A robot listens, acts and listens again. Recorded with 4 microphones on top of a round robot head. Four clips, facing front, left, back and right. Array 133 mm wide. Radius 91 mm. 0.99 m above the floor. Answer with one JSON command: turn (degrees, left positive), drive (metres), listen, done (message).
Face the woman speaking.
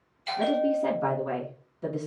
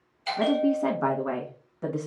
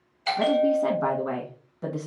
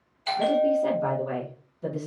{"turn": 125}
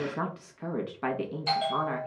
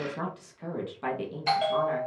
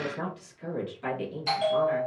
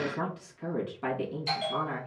{"turn": 15}
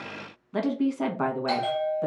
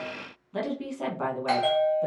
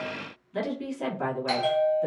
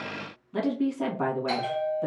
{"done": "Facing the woman speaking."}